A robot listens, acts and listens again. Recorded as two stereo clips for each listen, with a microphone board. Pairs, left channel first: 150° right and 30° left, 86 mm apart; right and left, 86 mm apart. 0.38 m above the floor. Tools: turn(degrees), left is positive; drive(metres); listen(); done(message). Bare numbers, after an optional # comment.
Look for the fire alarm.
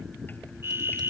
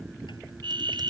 # The fire alarm: 90° left.
turn(90)
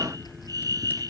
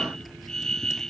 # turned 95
done("Found it: a fire alarm, straight ahead.")